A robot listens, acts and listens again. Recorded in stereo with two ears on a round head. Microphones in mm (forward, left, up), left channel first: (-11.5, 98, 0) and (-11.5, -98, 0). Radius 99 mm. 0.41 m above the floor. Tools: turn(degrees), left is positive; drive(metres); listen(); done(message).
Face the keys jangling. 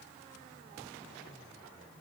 listen()
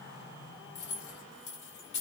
turn(degrees=55)
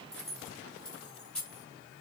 done("Found it: keys jangling, straight ahead, 1 to 2 m away.")